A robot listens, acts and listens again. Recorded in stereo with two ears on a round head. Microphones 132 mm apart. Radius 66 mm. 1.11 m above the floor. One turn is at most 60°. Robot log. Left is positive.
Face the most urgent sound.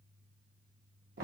cmd idle
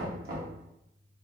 cmd idle
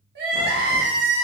cmd yaw -60
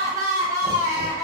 note: So it is at 20° right.
cmd yaw -20
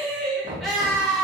end: Facing the crying.